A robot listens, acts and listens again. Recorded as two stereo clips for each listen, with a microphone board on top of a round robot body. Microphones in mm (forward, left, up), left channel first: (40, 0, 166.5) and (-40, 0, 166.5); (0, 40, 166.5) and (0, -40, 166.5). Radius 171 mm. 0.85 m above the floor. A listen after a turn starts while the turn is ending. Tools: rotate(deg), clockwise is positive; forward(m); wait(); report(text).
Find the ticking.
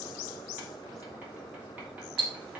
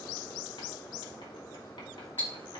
rotate(-160)
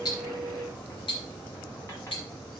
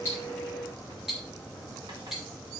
report("Found it: ticking, straight ahead, 2 to 4 m away.")